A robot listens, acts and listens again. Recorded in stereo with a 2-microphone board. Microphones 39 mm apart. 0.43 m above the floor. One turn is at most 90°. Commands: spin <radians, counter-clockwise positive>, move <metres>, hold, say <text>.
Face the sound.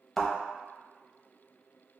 spin 0.52
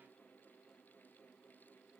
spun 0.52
hold
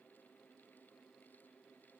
say I heard a thud, but can't make it out now. It was about 20° right or 140° left.